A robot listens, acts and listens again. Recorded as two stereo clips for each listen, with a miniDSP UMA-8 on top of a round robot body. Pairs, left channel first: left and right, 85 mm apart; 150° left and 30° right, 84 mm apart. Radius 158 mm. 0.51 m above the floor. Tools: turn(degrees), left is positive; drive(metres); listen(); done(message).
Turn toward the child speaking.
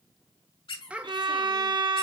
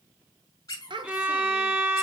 turn(degrees=-15)
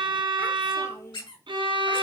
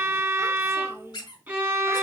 turn(degrees=35)
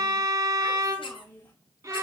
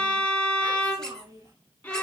turn(degrees=20)
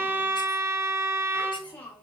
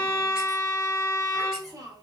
turn(degrees=15)
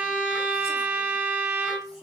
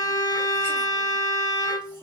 listen()
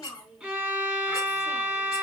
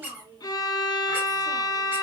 done("Facing the child speaking, 2 to 4 m away.")